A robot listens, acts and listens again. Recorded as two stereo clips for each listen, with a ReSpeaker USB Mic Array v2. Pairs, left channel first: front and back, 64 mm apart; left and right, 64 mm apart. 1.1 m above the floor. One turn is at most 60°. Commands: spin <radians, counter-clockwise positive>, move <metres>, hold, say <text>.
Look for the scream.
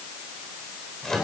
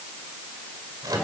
hold
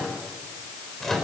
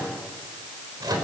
hold
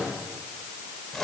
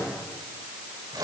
say I can't make out a scream, only a microwave.